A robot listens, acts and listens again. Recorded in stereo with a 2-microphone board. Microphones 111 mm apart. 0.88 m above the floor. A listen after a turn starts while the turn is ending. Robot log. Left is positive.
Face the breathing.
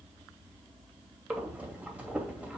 cmd yaw -30
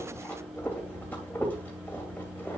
note: So it is at 15° left.
cmd yaw +15
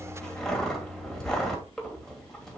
end: Found it: breathing, straight ahead.